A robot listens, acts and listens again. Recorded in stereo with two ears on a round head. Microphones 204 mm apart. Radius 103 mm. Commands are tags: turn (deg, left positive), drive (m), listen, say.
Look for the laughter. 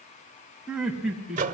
<turn deg="-30"/>
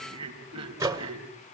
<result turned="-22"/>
<turn deg="-155"/>
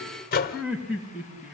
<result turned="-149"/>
<say>Found it: laughter, straight ahead, over 4 m away.</say>